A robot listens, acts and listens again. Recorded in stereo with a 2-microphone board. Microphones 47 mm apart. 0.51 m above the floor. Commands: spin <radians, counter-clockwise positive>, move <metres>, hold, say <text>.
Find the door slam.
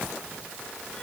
hold
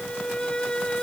hold
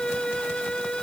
say I can't make out a door slam, only a violin.